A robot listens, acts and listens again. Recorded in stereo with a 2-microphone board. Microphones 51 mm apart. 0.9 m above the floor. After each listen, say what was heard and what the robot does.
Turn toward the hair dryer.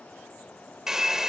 Turn 30° right.
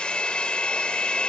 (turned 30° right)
So it is at 20° left. Turn 20° left.
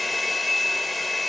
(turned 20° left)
Facing the hair dryer.